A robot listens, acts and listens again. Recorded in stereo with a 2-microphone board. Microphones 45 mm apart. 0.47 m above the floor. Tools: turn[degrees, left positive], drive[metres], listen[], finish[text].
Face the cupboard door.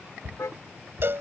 Thought: The cupboard door: about 60° right or 120° right.
Action: turn[-60]
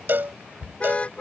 Thought: So it is at 15° right.
Action: turn[-15]
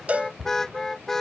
Action: finish[Found it: a cupboard door, straight ahead.]